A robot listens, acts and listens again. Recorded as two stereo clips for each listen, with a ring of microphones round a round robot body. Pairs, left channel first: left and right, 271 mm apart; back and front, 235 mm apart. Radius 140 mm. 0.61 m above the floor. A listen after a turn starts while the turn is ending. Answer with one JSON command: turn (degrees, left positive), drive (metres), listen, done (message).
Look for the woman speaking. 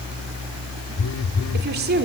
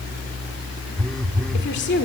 {"turn": -140}
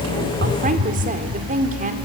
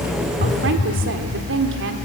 {"turn": -30}
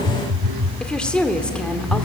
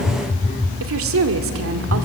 {"done": "Facing the woman speaking, 1 to 2 m away."}